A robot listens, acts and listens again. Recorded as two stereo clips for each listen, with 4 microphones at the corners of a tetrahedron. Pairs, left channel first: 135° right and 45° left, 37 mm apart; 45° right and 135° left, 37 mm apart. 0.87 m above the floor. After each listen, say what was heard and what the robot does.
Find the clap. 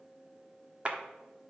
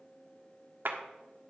The clap: 105° left. Turn 105° left.
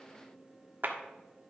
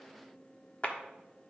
The clap is now 10° left. Turn 10° left.
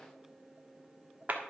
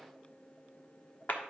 Facing the clap.